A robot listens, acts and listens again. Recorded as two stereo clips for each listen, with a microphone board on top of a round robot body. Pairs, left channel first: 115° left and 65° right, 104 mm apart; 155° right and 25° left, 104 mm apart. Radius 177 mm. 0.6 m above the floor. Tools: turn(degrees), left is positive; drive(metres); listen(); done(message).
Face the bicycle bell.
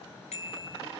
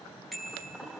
turn(degrees=110)
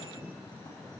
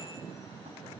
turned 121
turn(degrees=-10)
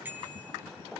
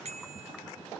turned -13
done("Facing the bicycle bell, over 4 m away.")